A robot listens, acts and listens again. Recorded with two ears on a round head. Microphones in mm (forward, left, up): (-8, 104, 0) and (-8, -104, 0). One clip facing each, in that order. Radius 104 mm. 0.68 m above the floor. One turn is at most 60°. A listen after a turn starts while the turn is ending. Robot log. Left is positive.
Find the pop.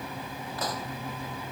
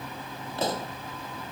note: The pop: about 25° right or 155° right.
cmd yaw -25
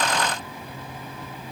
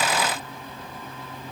cmd idle
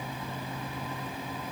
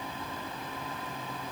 end: I heard a pop, but can't make it out now. It was about straight ahead or 130° right.